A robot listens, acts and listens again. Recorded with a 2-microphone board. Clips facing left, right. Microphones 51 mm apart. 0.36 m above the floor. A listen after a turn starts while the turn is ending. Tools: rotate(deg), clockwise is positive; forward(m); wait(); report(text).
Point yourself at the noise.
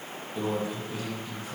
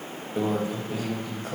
rotate(55)
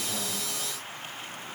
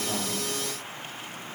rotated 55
wait()
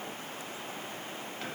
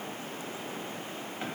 wait()
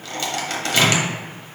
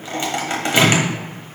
rotate(25)
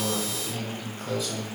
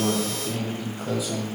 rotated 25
rotate(10)
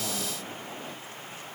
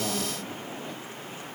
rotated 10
wait()
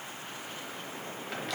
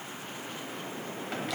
report("Facing the microwave, 1 to 2 m away.")